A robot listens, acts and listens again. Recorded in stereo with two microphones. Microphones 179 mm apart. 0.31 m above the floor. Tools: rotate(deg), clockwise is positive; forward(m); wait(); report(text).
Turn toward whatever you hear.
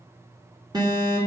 rotate(20)
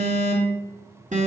rotate(135)
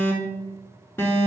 rotate(-15)
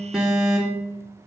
report("Found it: an alarm, straight ahead.")